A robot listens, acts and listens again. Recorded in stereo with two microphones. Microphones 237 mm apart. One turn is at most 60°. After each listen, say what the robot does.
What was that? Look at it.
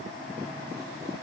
Keep listening.
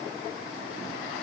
Keep listening.
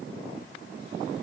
I can't make out anything.